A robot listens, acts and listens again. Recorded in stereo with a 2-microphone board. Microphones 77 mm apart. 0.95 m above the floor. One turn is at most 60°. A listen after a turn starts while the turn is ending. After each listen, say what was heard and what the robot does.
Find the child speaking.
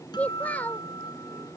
The child speaking: about 20° left or 160° left. Turn 20° left.
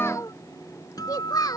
So it is at 120° left. Turn 60° left.
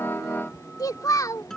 The child speaking is now 50° left. Turn 50° left.
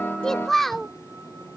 Facing the child speaking.